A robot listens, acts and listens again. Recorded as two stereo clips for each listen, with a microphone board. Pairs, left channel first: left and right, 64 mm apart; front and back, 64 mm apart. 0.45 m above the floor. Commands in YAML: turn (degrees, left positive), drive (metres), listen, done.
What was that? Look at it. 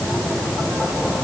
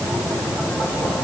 listen: true
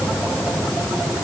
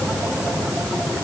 listen: true
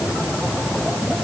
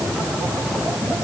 done: "I can't make out anything to turn to."